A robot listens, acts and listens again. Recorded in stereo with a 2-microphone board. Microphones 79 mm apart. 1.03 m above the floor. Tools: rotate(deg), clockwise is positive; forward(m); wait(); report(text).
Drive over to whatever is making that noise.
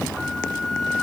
rotate(-30)
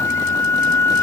rotate(-145)
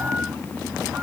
wait()
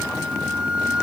rotate(15)
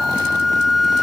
forward(1.0)
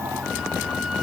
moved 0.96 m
wait()
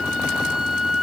forward(1.0)
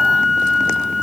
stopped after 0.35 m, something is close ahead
report("Arrived at the flute, straight ahead.")